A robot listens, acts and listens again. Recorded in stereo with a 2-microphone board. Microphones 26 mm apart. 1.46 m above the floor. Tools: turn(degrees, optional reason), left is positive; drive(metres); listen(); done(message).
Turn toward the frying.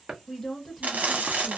turn(degrees=-90)
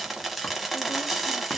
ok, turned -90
done("Found it: frying, straight ahead, under 1 m away.")